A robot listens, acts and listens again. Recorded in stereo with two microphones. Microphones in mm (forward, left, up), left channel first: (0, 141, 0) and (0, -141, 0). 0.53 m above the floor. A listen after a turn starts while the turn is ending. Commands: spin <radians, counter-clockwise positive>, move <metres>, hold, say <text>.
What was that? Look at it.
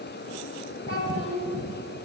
spin 0.87
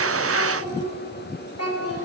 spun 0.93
spin 0.96
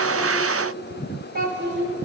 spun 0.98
spin -0.79
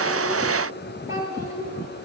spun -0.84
spin -0.17
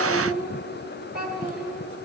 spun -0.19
say Facing the child speaking.